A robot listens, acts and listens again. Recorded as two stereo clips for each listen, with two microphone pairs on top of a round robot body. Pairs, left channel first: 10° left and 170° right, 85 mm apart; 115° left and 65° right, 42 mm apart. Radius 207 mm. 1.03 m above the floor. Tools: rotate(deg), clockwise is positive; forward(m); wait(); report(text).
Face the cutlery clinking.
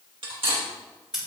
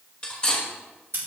rotate(-180)
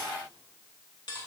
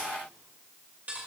rotate(20)
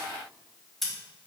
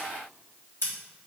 wait()
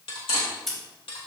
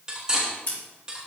report("Facing the cutlery clinking, 2 to 4 m away.")